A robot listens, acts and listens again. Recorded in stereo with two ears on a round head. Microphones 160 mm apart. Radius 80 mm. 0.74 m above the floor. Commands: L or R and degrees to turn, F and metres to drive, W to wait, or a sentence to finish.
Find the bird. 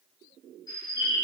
L20
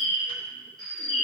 Facing the bird.